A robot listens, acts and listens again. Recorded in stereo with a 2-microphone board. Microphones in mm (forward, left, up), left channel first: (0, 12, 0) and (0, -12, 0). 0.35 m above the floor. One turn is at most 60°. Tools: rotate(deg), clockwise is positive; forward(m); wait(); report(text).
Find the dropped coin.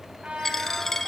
rotate(-15)
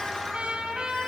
wait()
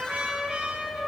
report("I heard a dropped coin, but can't make it out now. It was about straight ahead or 150° left.")